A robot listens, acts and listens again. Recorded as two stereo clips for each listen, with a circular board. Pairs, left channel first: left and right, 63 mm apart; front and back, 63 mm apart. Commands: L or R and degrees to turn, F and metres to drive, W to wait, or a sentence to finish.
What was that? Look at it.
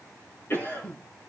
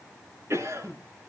L140
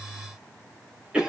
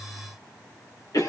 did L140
R15
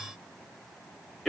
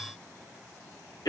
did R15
Facing the cough, over 4 m away.